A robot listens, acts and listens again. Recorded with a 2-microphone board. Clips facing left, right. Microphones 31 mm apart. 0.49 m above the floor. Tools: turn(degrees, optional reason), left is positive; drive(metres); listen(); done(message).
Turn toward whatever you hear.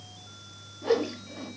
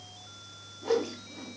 turn(degrees=35, reason="The whoosh: about 35° left or 145° left.")
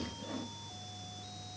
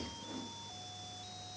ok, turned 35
listen()
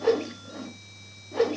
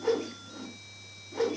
turn(degrees=105, reason="So it is at 105° left.")
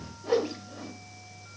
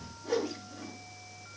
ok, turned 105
turn(degrees=35, reason="The whoosh is now 35° left.")
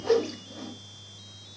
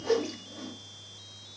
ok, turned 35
turn(degrees=15, reason="The whoosh is now 15° left.")
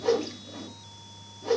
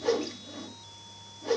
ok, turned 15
done("Found it: a whoosh, straight ahead.")